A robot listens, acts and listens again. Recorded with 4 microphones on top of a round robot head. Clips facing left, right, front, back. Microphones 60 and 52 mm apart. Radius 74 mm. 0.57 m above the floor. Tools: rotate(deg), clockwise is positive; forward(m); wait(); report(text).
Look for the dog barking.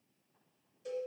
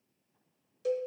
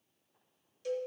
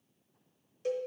wait()
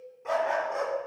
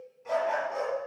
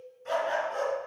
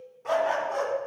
rotate(-160)
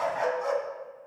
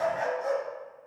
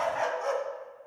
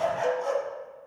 rotate(-55)
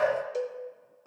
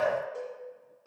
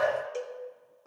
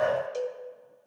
rotate(-25)
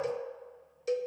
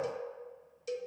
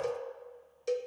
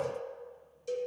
wait()
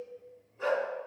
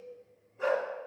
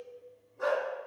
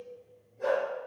rotate(10)
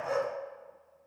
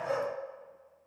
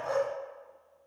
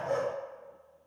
report("Found it: a dog barking, straight ahead.")